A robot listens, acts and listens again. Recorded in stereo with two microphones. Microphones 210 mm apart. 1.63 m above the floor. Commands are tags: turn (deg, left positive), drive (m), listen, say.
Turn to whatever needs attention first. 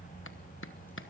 <listen/>
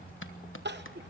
<turn deg="-55"/>
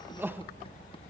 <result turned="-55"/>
<turn deg="-10"/>
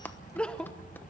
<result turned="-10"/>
<say>Found it: crying, straight ahead, under 1 m away.</say>